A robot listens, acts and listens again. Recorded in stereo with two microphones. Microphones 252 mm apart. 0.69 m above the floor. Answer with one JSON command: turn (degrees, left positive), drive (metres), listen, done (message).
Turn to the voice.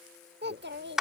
{"turn": -45}
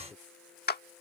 {"done": "Facing the child speaking."}